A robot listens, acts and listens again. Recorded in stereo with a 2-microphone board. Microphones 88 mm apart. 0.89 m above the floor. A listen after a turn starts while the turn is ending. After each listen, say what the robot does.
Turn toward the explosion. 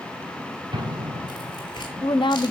Turn 60° right.
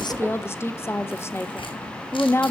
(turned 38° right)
Keep listening.
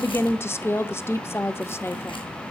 I heard an explosion, but can't make it out now. It was about 20° right or 80° right.